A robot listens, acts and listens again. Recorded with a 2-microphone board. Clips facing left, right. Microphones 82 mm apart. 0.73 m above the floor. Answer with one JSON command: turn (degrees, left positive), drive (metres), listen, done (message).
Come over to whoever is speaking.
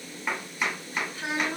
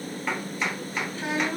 {"turn": -35}
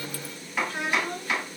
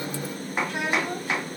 {"turn": -105}
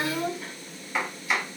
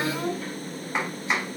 {"turn": 15}
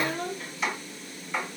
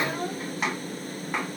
{"drive": 1.0}
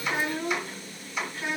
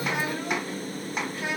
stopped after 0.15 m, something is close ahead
{"done": "Something is in my way. I am facing the child speaking but have not reached it."}